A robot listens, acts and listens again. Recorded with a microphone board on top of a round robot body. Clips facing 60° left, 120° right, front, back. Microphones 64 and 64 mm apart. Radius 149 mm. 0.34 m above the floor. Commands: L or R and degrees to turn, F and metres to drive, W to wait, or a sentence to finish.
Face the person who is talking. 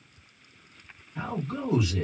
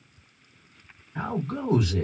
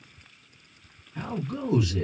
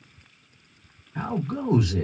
R140
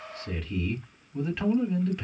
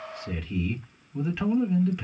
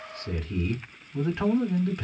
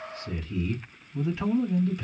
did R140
R30
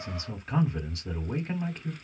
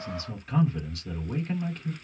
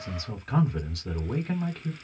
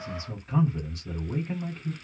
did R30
Found it: a man speaking, straight ahead.